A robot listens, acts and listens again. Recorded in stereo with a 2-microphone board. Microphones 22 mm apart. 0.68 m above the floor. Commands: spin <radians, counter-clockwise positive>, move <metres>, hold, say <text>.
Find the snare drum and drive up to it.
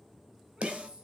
spin -1.31
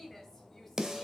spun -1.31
spin -0.44
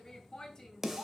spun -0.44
spin -0.26
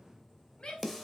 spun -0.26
move 1.0
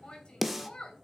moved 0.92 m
spin -0.17
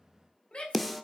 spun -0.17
move 1.0
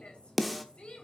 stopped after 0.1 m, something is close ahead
say Arrived at the snare drum, straight ahead.